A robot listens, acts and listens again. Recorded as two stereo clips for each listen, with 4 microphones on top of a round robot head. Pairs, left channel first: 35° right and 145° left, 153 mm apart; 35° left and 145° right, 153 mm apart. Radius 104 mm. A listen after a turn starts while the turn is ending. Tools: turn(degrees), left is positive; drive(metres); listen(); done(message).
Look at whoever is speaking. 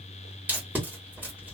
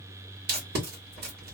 listen()
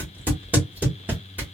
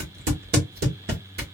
listen()
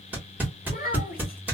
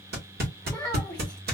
turn(degrees=-50)
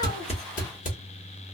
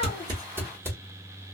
listen()
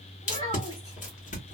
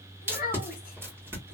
turn(degrees=10)
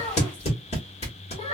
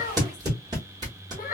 done("Facing the child speaking, 1 to 2 m away.")